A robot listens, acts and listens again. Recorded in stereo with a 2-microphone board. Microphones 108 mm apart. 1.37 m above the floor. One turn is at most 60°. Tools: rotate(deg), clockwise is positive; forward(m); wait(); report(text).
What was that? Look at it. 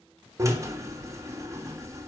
rotate(30)
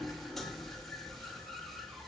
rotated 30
report("Found it: a drill, straight ahead.")